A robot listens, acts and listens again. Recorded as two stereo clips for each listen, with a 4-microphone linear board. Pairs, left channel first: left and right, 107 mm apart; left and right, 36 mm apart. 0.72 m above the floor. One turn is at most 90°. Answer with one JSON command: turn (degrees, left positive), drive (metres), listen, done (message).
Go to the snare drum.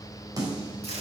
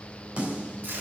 {"turn": -35}
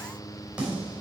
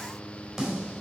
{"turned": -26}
{"turn": -10}
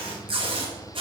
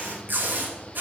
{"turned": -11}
{"listen": true}
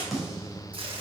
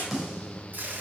{"drive": 1.0}
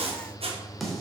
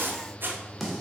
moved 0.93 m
{"drive": 1.0}
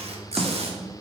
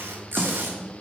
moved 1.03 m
{"drive": 1.0}
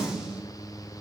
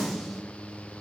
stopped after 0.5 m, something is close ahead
{"done": "I am next to the snare drum."}